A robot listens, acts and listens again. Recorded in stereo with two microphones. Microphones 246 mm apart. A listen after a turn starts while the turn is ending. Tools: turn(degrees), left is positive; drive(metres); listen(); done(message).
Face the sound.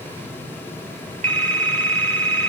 turn(degrees=-90)
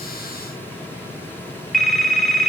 done("Facing the phone ringing.")